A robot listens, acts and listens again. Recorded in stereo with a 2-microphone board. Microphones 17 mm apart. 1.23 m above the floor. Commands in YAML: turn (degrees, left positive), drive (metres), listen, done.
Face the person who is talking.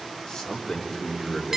turn: 30
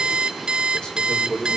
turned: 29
turn: 115
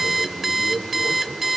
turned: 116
done: "Found it: a man speaking, straight ahead."